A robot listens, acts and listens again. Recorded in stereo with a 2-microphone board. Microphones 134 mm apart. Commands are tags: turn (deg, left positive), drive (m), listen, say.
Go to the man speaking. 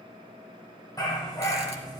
<listen/>
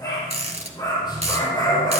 <listen/>
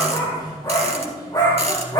<say>I can't make out a man speaking to turn to.</say>